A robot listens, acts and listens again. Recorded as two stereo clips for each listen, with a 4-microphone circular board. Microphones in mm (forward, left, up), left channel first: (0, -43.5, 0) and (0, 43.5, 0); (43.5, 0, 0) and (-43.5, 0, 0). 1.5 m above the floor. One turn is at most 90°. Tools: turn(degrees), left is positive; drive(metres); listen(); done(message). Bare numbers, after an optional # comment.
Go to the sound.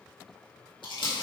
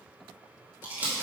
# The crumpling: 110° right.
turn(-90)
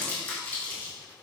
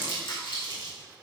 # The crumpling is now 20° right.
turn(-20)
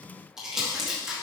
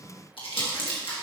drive(1.0)
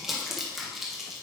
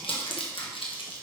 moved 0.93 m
drive(1.0)
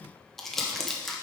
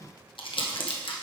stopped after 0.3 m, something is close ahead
done("Arrived at the crumpling, straight ahead.")